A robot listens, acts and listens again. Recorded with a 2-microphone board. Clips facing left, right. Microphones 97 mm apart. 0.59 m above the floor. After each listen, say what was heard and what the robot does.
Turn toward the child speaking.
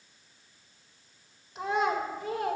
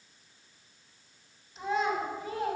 The child speaking: about 70° left or 110° left. Turn 70° left.
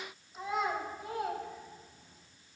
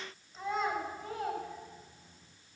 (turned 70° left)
So it is at 10° left. Turn 10° left.
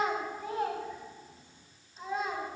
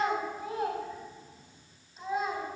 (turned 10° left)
Facing the child speaking.